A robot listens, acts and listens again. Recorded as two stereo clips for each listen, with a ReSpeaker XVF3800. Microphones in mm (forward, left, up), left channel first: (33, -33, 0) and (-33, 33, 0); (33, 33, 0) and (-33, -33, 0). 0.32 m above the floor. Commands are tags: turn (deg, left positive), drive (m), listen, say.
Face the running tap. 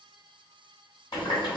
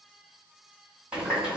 <turn deg="-55"/>
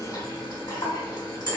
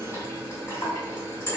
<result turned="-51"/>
<say>Facing the running tap.</say>